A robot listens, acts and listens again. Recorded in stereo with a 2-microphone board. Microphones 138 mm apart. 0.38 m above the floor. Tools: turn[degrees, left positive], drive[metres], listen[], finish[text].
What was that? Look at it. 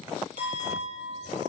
Action: turn[-90]
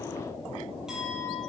Action: finish[Found it: a clink, straight ahead.]